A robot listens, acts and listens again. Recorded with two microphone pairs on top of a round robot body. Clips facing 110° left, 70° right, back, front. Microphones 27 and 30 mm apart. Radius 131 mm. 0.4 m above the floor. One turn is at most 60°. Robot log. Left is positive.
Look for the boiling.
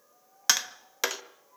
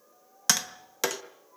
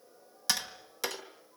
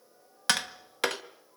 cmd idle
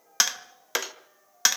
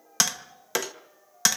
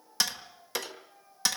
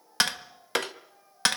cmd idle
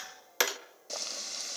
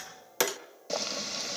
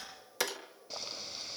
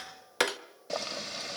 end: Facing the boiling, 1 to 2 m away.